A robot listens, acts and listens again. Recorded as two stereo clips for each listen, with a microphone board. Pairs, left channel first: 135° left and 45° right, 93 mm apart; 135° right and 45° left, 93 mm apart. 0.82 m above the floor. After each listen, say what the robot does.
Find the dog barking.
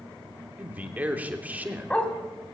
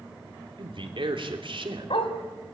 Turn 145° right.
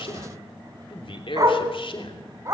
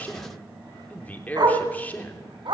Turn 10° left.
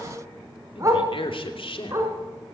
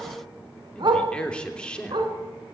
Turn 15° left.
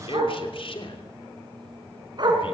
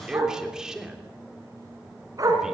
Facing the dog barking, 2 to 4 m away.